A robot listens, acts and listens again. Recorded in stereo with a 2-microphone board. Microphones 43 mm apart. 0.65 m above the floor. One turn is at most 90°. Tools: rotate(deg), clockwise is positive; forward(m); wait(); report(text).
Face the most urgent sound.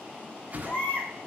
rotate(-50)
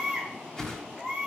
report("Found it: a baby crying, straight ahead, 2 to 4 m away.")